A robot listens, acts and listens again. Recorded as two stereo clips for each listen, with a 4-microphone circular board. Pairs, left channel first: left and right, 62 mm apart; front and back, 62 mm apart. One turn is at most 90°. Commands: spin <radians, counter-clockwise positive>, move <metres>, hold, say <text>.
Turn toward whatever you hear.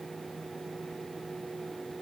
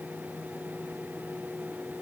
hold
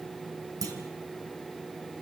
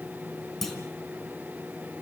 spin -1.48
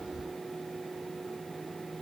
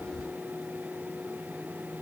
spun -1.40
say Facing where the clunk came from. I can't hear it now.